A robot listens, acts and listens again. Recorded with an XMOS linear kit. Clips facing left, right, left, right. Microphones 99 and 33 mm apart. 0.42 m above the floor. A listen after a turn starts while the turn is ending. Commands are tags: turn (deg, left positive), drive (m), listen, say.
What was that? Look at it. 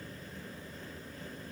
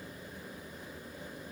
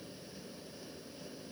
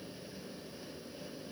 <listen/>
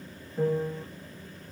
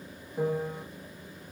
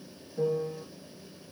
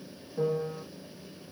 <turn deg="-20"/>
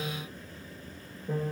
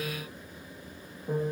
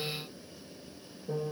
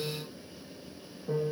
<turn deg="-140"/>
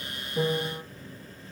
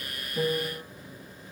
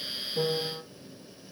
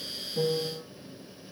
<turn deg="35"/>
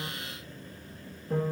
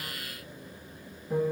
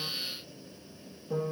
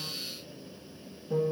<say>Found it: a piano, straight ahead.</say>